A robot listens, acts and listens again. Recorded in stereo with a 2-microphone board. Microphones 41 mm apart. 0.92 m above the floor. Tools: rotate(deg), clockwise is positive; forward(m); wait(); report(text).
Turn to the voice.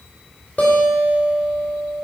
wait()
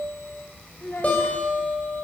rotate(-75)
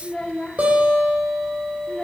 rotate(-25)
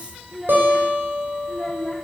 report("Found it: a child speaking, straight ahead.")